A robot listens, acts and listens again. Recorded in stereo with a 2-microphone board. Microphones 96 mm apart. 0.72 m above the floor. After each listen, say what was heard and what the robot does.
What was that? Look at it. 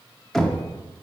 Turn 30° left.
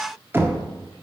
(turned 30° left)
So it is at 25° right. Turn 25° right.
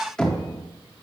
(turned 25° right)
Found it: knocking, straight ahead, under 1 m away.